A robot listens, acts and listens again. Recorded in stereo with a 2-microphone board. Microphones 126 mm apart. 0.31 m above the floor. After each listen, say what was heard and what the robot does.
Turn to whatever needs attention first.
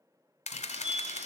Turn 30° right.
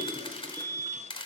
So it is at 10° left. Turn 10° left.
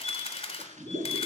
Found it: a fire alarm, straight ahead.